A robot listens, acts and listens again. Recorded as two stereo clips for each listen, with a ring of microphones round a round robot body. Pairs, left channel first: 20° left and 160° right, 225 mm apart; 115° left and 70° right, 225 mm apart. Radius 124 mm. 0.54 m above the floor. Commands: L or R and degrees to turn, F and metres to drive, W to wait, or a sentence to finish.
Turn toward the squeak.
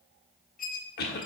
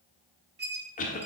R25
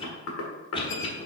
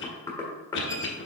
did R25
W
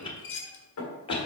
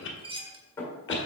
Facing the squeak.